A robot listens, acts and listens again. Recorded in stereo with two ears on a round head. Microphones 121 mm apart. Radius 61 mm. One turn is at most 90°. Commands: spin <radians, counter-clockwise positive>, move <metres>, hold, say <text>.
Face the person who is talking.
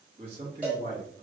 spin -0.79
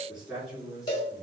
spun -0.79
say Found it: a man speaking, straight ahead, 2 to 4 m away.